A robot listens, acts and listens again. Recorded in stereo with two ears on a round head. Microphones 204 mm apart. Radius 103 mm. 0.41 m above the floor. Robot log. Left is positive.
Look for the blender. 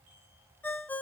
cmd idle
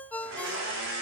cmd yaw -90
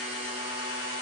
note: So it is at 10° right.
cmd yaw -10
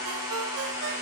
end: Found it: a blender, straight ahead, over 4 m away.